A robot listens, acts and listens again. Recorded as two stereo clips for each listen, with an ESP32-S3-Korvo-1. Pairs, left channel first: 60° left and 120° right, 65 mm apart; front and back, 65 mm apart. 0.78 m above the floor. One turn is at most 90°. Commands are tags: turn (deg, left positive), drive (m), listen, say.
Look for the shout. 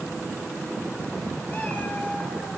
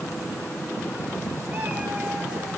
<listen/>
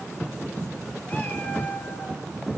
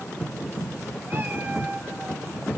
<listen/>
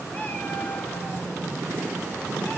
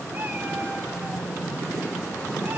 <say>I can't make out a shout.</say>